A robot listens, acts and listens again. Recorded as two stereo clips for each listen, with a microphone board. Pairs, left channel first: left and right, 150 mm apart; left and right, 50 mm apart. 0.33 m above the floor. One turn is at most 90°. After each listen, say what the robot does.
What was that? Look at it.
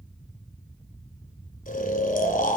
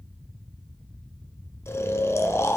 Turn 65° left.
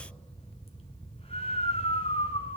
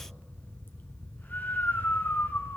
Turn 45° left.
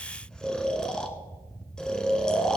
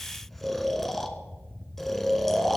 Facing the snoring, 1 to 2 m away.